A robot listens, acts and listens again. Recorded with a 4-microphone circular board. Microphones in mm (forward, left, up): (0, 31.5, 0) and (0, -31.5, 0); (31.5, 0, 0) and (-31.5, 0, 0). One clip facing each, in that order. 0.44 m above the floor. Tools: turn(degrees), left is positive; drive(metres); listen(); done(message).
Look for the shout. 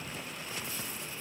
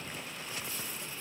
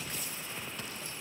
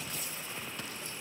listen()
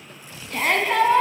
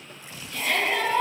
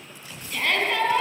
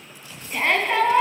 turn(degrees=120)
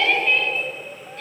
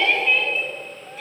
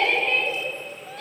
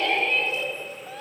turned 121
done("Facing the shout, 2 to 4 m away.")